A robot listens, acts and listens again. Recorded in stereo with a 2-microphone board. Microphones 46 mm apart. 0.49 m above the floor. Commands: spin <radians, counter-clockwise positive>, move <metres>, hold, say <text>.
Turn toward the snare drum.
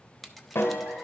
spin 1.13
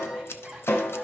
spin 0.87
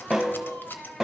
spin -0.17
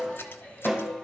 say Found it: a snare drum, straight ahead.